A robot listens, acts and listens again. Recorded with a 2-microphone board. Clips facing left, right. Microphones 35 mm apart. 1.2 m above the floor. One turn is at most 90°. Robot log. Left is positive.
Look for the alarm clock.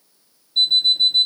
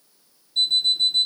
note: The alarm clock: about 25° left or 155° left.
cmd yaw +25
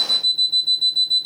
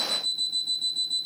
note: So it is at 130° left.
cmd yaw +90
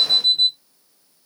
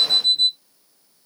note: The alarm clock is now 30° left.
cmd yaw +30
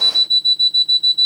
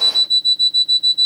note: The alarm clock is now 10° left.
cmd yaw +10
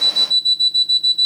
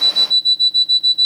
end: Facing the alarm clock.